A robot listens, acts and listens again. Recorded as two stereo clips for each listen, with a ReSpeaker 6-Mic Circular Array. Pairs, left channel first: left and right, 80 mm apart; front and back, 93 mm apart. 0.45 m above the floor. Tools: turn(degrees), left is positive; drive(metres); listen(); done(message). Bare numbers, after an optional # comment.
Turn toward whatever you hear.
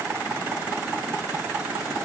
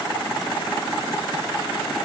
listen()
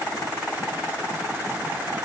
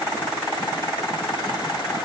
listen()
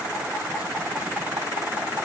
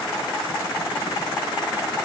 done("I can't make out anything to turn to.")